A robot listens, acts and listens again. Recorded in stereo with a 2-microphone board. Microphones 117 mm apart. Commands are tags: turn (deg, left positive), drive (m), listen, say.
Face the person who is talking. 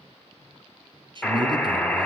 <turn deg="-40"/>
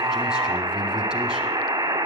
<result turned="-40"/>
<listen/>
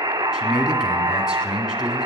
<say>Facing the man speaking, 2 to 4 m away.</say>